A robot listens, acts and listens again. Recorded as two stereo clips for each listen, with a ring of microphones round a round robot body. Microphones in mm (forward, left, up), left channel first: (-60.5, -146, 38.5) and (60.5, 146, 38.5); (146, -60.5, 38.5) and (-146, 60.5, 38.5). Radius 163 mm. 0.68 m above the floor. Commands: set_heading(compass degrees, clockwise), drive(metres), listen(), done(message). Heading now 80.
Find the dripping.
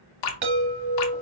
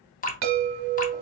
set_heading(170)
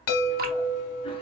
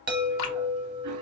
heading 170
done("Found it: dripping, straight ahead, under 1 m away.")